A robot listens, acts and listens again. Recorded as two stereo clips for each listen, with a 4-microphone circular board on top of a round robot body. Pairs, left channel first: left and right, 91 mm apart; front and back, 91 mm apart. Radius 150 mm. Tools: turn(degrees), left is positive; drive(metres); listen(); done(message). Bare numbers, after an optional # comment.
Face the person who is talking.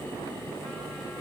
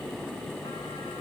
listen()
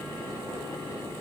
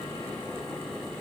listen()
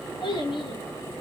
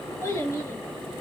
# The child speaking: 60° left.
turn(60)
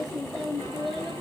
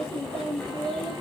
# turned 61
done("Facing the child speaking, over 4 m away.")